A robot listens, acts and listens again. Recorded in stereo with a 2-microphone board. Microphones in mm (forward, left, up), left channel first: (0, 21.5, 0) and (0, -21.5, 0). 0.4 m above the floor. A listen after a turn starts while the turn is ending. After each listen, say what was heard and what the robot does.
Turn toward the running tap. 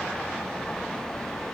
Keep listening.
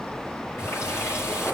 Turn 90° left.
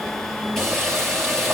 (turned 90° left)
Facing the running tap.